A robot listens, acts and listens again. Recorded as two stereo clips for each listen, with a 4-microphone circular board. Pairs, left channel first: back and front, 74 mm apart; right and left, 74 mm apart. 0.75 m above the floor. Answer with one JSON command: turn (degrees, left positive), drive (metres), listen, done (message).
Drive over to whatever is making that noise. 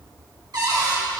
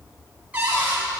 {"turn": 20}
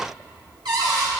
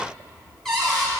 {"drive": 1.0}
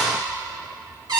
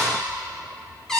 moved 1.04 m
{"turn": -10}
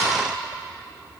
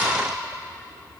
{"listen": true}
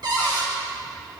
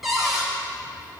{"drive": 1.0}
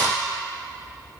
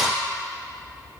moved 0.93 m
{"drive": 1.0}
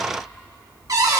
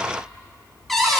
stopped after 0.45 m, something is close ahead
{"done": "I am next to the cupboard door."}